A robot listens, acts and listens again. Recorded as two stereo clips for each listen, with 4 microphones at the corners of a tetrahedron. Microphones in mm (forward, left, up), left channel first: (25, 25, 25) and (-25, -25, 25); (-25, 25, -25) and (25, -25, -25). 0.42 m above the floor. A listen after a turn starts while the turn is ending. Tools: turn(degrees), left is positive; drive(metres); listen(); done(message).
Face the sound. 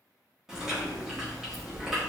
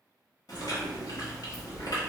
turn(degrees=145)
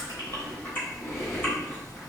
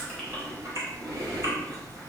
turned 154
turn(degrees=-10)
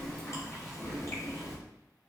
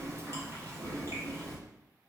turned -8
done("Facing the chewing, 1 to 2 m away.")